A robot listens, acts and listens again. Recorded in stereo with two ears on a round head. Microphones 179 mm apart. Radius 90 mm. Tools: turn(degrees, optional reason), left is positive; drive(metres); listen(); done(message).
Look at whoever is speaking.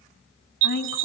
turn(degrees=55, reason="The woman speaking: about 55° left or 125° left.")
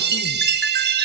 listen()
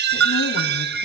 listen()
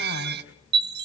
done("I heard a woman speaking, but can't make it out now. It was about straight ahead or 70° left.")